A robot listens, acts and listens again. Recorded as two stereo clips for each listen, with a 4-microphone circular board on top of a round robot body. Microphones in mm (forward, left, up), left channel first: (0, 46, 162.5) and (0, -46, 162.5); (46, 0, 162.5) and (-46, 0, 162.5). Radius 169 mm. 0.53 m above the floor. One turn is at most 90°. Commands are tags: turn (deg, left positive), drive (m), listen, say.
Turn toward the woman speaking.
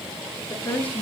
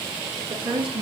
<turn deg="90"/>
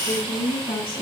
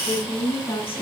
<turn deg="70"/>
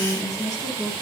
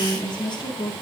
<turn deg="45"/>
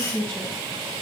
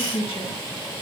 <turn deg="15"/>
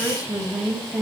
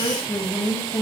<say>Facing the woman speaking.</say>